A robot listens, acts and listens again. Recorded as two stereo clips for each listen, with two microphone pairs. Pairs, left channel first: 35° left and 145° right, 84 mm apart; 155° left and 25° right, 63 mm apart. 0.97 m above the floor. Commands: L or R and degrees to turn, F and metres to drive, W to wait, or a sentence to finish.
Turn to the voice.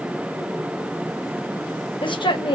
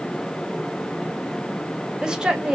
L50
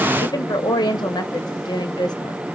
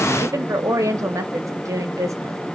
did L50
Facing the woman speaking, 1 to 2 m away.